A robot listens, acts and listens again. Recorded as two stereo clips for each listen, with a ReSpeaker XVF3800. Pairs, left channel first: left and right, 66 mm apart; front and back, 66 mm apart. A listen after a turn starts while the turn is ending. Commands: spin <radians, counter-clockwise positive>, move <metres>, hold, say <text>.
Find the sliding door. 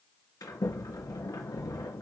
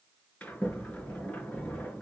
spin 1.22
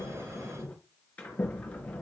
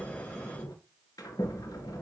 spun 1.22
spin 0.35
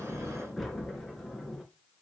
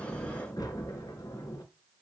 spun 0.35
say Found it: a sliding door, straight ahead.